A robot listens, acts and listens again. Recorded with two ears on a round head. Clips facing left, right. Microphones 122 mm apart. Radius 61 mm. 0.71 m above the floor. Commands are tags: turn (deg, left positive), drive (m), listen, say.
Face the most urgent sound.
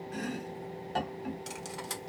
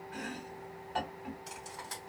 <listen/>
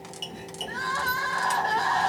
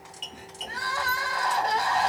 <turn deg="-30"/>
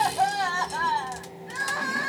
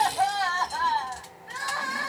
<turn deg="15"/>
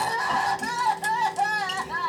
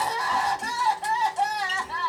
<turn deg="10"/>
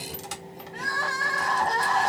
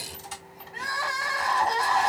<say>Found it: crying, straight ahead.</say>